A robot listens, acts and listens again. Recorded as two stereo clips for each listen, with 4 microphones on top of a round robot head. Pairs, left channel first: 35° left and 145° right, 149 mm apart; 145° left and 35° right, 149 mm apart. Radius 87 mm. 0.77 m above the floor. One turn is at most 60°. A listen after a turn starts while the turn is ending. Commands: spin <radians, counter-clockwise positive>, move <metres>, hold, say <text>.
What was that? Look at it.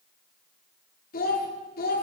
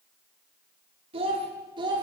spin 0.44
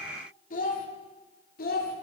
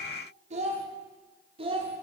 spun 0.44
spin 0.35
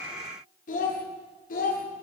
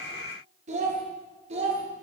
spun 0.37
spin 0.17
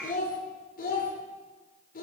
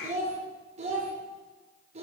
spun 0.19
spin 0.17
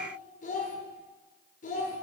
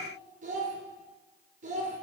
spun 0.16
say Found it: a child speaking, straight ahead, 2 to 4 m away.